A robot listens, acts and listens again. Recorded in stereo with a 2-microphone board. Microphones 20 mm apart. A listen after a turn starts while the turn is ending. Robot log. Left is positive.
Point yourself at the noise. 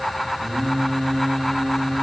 note: The singing: about 60° right or 120° right.
cmd yaw -60
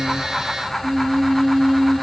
note: So it is at 80° right.
cmd yaw -80
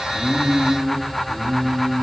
note: The singing is now 30° right.
cmd yaw -30
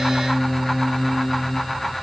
note: The singing is now 10° right.
cmd yaw -10
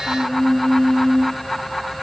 end: Facing the singing.